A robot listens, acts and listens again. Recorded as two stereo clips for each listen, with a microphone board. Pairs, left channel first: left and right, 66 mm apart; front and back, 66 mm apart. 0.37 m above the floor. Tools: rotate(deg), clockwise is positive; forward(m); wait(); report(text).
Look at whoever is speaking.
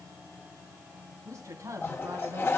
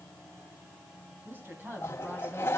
rotate(125)
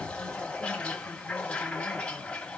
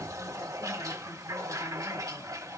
wait()
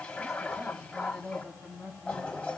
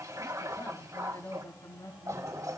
rotate(10)
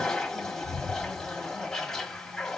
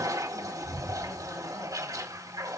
wait()
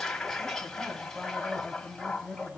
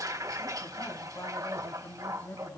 report("Facing the woman speaking, 2 to 4 m away.")